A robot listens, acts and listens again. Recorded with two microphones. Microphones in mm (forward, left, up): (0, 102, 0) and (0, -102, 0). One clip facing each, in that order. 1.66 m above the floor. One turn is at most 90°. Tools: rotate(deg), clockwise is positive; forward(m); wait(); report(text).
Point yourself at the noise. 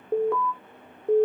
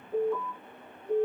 rotate(-70)
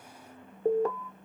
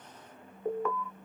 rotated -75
rotate(-35)
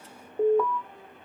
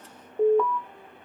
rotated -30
report("Facing the alarm, under 1 m away.")